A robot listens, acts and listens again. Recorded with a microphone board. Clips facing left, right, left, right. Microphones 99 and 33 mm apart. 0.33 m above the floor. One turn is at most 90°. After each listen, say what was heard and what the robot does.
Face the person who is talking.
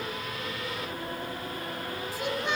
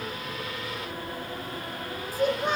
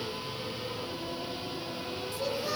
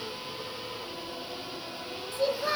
The child speaking: about 45° right or 135° right. Turn 45° right.
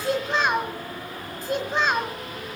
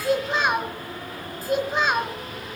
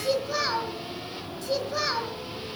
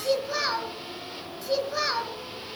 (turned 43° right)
Facing the child speaking, 1 to 2 m away.